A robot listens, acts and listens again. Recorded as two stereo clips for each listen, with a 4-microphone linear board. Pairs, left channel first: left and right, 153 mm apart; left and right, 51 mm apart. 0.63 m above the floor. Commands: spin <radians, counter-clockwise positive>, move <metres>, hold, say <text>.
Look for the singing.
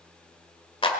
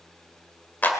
hold
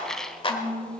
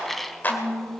spin 1.13
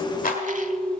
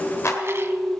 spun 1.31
spin 0.79
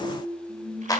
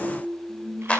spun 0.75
say Facing the singing, over 4 m away.